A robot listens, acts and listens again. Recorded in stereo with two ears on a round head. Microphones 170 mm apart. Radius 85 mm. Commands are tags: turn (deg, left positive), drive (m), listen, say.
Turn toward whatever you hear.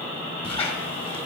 <turn deg="30"/>
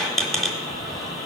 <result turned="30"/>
<say>Facing the squeak, 1 to 2 m away.</say>